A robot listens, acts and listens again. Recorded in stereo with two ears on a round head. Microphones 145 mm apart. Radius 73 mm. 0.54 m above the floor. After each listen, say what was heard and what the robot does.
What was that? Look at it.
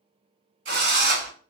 The drill: about 70° right or 110° right. Turn 70° right.
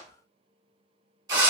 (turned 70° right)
So it is at 25° right. Turn 25° right.
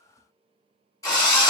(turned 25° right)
The drill is now 20° left. Turn 20° left.
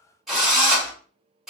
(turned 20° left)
Found it: a drill, straight ahead, 1 to 2 m away.